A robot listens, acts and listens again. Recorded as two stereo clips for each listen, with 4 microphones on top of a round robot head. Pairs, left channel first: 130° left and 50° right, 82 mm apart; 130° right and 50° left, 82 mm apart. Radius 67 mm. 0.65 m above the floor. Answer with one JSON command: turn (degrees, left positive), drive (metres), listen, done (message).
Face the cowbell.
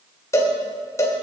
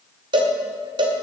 {"turn": 75}
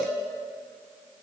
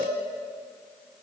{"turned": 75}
{"listen": true}
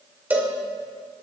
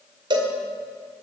{"turn": 20}
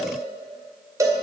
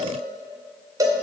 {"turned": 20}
{"done": "Facing the cowbell, 2 to 4 m away."}